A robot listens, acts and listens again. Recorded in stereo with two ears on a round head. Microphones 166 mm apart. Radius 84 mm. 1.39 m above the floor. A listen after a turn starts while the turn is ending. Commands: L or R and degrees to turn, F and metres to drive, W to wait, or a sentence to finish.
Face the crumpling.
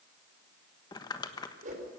L20
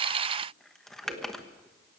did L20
Found it: crumpling, straight ahead, 1 to 2 m away.